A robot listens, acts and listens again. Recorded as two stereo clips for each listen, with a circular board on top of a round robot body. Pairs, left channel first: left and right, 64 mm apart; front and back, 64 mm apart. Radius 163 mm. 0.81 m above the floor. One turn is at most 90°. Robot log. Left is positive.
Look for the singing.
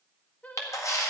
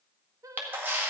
note: The singing: 155° left.
cmd yaw +90
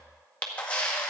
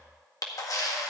note: Nothing new. It was at 65° left.
cmd yaw +65
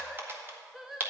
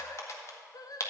end: Found it: singing, straight ahead.